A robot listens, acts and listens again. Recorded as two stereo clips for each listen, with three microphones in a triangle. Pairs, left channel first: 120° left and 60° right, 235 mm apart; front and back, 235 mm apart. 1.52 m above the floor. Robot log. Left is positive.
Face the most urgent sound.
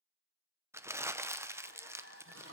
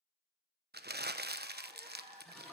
note: The crying: 120° left.
cmd yaw +120
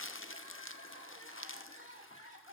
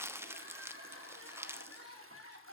end: Facing the crying.